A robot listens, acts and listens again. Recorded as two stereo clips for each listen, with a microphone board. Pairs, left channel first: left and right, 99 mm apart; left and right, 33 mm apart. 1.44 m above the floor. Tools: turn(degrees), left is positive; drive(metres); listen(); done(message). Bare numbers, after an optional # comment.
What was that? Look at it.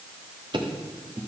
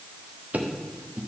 # The ticking: about 55° right or 125° right.
turn(-55)
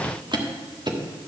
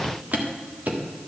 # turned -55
# So it is at 60° right.
turn(-60)
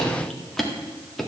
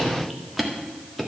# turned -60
done("Facing the ticking.")